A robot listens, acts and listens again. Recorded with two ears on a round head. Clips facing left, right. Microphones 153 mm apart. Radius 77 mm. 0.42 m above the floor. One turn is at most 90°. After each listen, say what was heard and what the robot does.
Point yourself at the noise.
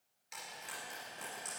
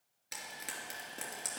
Turn 90° right.
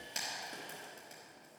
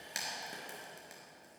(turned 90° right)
So it is at 15° right. Turn 15° right.
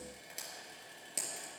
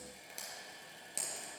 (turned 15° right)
Facing the frying.